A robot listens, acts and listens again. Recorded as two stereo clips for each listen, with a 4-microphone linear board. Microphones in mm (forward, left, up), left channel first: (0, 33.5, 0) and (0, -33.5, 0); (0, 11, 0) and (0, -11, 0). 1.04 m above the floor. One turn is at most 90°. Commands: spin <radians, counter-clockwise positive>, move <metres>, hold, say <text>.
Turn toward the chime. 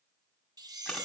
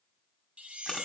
spin -1.22
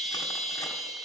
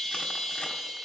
say Found it: a chime, straight ahead.